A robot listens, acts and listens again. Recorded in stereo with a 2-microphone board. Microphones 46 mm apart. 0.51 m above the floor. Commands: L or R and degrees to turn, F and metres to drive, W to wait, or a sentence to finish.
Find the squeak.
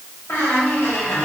L70
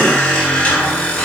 L30
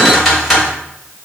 Found it: a squeak, straight ahead.